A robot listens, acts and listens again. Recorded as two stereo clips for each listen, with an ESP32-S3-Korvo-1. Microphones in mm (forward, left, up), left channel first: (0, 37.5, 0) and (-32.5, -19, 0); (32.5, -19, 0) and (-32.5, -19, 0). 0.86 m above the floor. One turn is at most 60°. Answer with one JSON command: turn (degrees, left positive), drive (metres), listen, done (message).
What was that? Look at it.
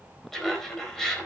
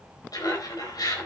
{"turn": -20}
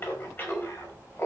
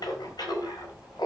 {"done": "Facing the laughter."}